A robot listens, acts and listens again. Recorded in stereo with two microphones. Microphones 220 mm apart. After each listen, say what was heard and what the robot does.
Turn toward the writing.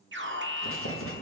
Turn 90° left.
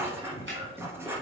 So it is at 10° right. Turn 10° right.
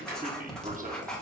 Found it: writing, straight ahead.